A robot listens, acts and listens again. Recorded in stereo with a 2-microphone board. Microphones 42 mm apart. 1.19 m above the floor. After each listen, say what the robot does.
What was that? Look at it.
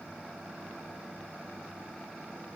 Keep listening.
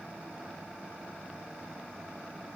Keep listening.
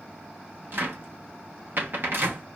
Turn 55° right.
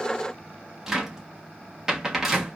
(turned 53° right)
Turn 10° right.
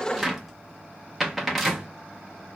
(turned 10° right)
Found it: a cupboard door, straight ahead.